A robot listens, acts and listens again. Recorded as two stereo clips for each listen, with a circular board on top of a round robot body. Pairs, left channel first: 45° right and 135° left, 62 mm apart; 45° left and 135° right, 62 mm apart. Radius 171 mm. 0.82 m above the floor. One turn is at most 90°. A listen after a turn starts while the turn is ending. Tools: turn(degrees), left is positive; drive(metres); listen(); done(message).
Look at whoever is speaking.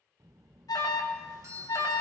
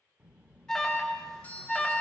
turn(degrees=90)
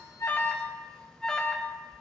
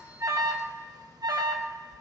turn(degrees=70)
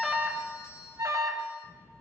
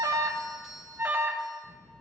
done("Found it: a child speaking, straight ahead, under 1 m away.")